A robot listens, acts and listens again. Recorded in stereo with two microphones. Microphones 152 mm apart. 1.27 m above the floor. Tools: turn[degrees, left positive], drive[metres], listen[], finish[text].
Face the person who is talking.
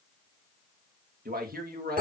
Action: turn[-90]
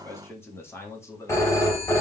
Thought: So it is at 20° left.
Action: turn[20]
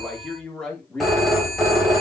Action: finish[Facing the man speaking.]